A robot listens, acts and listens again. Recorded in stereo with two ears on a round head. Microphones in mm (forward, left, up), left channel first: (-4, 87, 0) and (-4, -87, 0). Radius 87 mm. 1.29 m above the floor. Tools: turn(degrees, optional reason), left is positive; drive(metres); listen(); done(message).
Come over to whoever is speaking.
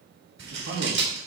turn(degrees=-90)
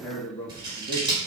turn(degrees=10, reason="So it is at 10° left.")
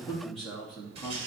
drive(metres=1.0)
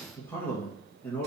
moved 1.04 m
turn(degrees=10, reason="The man speaking is now 10° left.")
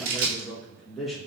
drive(metres=1.0)
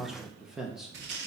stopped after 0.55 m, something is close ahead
done("I am next to the man speaking.")